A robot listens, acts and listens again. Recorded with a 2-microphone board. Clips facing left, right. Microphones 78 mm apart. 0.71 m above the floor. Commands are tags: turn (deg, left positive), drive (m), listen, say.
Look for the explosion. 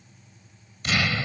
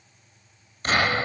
<turn deg="-40"/>
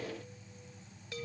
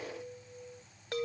<listen/>
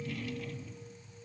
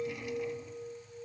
<say>I heard an explosion, but can't make it out now. It was about straight ahead or 100° right.</say>